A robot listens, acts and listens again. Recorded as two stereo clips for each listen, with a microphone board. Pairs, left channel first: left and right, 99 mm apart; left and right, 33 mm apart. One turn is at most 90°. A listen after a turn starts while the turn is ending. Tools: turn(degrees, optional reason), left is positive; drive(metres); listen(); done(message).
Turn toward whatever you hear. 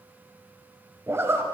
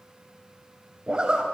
turn(degrees=-25, reason="The zipper: about 25° right or 155° right.")
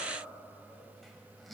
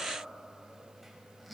listen()
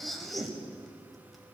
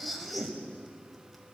done("Facing the zipper.")